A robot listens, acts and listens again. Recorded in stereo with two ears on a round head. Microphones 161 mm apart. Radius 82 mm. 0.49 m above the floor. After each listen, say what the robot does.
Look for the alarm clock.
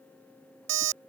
Turn 75° right.
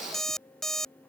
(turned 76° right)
Facing the alarm clock.